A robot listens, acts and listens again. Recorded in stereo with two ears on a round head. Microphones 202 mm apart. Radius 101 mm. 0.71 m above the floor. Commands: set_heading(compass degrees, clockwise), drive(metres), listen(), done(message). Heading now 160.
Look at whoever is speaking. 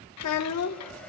set_heading(70)
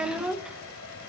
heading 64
done("Found it: a child speaking, straight ahead, under 1 m away.")